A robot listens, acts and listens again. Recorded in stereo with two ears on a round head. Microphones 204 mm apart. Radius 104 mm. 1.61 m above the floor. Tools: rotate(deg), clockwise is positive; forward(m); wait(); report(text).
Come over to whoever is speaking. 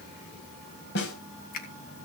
wait()
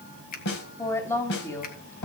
rotate(-30)
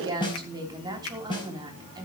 rotate(20)
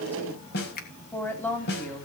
rotate(-10)
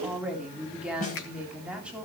forward(1.0)
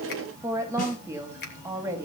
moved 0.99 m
rotate(15)
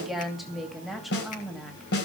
forward(1.0)
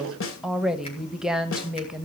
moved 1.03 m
forward(1.0)
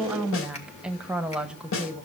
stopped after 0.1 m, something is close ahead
report("I am next to the woman speaking.")